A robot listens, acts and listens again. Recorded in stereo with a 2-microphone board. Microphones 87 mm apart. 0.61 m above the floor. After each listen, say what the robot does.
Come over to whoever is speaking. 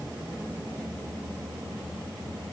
Keep listening.
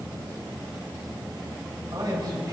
Turn 45° right.
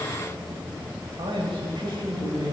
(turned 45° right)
Turn 85° right.
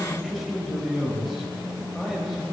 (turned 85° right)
Drive 1.0 m forward.
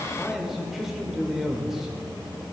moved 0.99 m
Drive 1.0 m forward.
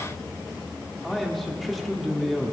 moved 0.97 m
Drive 1.0 m forward.
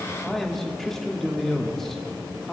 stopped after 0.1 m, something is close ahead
I am next to the man speaking.